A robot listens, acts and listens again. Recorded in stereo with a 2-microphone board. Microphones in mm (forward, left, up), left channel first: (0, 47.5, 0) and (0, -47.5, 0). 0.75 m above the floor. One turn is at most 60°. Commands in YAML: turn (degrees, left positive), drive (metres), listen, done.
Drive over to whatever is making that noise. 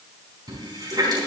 turn: -45
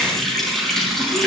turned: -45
drive: 1.0
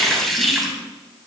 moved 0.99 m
drive: 1.0
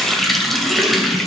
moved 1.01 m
drive: 1.0
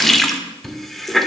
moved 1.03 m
drive: 1.0
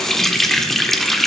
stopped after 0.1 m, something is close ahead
done: "Arrived at the running tap, straight ahead."